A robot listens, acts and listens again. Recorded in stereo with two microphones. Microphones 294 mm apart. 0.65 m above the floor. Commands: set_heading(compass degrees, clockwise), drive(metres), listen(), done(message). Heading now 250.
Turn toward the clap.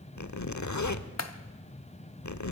set_heading(190)
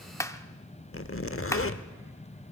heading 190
set_heading(180)
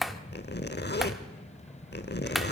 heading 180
done("Facing the clap.")